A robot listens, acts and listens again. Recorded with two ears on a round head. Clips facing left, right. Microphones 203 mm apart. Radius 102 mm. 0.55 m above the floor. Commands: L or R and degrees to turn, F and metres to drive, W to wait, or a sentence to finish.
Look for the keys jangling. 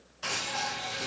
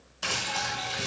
R65
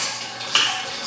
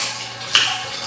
R35
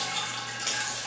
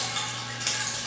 R15
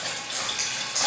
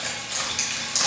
R20
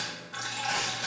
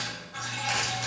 W
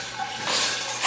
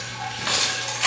R20
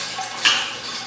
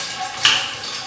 R10
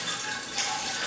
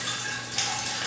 Found it: keys jangling, straight ahead, 2 to 4 m away.